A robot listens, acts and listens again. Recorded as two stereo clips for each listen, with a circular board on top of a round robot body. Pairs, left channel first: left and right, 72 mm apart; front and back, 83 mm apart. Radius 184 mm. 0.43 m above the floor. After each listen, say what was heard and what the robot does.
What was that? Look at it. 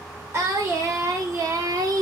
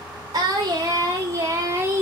The singing: 120° right. Turn 120° right.
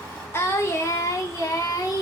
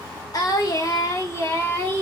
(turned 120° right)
The singing is now 60° left. Turn 60° left.
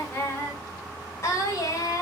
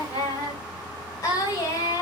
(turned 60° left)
The singing is now 45° left. Turn 45° left.
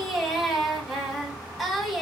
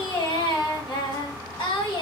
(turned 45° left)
Found it: singing, straight ahead.